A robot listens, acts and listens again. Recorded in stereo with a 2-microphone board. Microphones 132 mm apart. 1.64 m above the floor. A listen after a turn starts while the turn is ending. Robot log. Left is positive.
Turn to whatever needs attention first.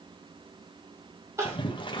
note: The crying: about 20° right or 160° right.
cmd yaw -20
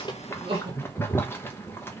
note: So it is at 135° right.
cmd yaw -135
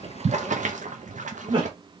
note: The crying is now 45° right.
cmd yaw -45
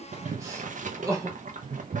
note: The crying is now 25° right.
cmd yaw -25
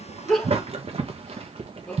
note: The crying is now 15° left.
cmd yaw +15
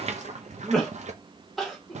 end: Found it: crying, straight ahead.